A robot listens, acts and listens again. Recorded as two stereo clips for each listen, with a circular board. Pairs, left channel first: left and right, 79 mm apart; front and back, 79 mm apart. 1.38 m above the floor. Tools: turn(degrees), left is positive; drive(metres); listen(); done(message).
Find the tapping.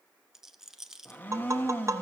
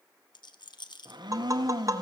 turn(degrees=-140)
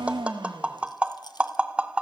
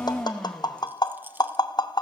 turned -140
turn(degrees=-15)
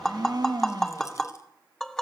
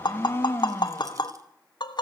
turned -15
done("Found it: tapping, straight ahead.")